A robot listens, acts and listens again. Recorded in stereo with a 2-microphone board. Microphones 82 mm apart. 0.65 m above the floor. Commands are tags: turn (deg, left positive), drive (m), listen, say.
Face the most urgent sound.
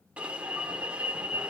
<turn deg="-15"/>
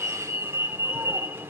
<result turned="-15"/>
<turn deg="-150"/>
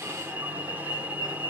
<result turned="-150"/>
<turn deg="-20"/>
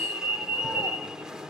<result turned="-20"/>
<turn deg="-10"/>
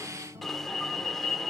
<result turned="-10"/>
<say>Found it: an alarm, straight ahead.</say>